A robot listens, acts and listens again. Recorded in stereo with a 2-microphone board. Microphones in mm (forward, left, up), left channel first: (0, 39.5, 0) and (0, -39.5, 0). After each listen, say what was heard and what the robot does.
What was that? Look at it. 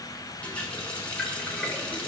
The running tap: about 15° left or 165° left. Turn 15° left.
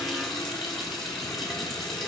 Found it: a running tap, straight ahead, 1 to 2 m away.